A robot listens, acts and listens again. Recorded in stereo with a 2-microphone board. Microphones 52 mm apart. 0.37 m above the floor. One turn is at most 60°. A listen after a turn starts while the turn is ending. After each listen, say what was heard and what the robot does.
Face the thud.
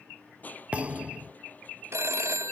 The thud: about 25° right or 155° right. Turn 25° right.
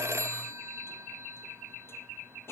Keep listening.
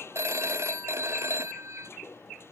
I heard a thud, but can't make it out now. It was about straight ahead or 130° right.